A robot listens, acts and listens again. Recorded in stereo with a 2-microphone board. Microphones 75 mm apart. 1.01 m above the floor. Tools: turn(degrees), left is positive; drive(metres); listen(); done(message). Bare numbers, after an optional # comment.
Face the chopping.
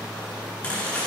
# The chopping: about 15° left or 165° left.
turn(15)
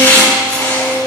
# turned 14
# So it is at 150° left.
turn(150)
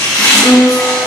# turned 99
# The chopping is now 50° left.
turn(50)
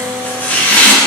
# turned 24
# The chopping is now 25° left.
turn(25)
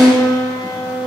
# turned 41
# Nothing new. It was at 15° right.
turn(-15)
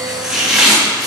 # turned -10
done("Facing the chopping, 2 to 4 m away.")